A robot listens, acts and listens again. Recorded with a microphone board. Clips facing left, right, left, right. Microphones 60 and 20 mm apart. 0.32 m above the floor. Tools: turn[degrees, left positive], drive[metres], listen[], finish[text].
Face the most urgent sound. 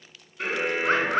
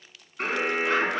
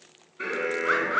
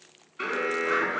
Thought: The alarm: about 45° right or 135° right.
Action: turn[-45]
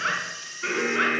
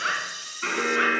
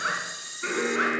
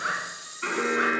Thought: So it is at 85° right.
Action: turn[-85]
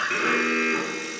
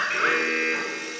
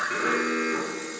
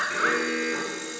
Action: finish[Facing the alarm, 2 to 4 m away.]